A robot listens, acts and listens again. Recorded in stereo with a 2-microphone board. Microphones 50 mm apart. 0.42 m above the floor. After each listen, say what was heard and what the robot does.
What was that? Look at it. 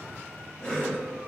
The cough: about 20° left or 160° left. Turn 20° left.
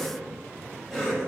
Facing the cough.